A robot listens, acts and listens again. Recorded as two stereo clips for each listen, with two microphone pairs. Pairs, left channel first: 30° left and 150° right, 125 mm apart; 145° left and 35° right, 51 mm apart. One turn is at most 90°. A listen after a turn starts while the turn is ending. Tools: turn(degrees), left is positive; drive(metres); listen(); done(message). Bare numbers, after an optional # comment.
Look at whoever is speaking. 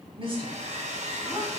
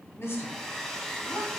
# The woman speaking: 160° left.
turn(90)
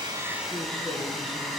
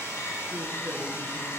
# Nothing new. It was at 70° left.
turn(70)
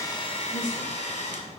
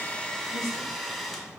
# The woman speaking is now 30° right.
turn(-30)
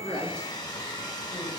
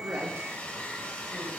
listen()
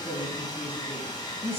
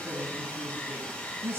done("Found it: a woman speaking, straight ahead.")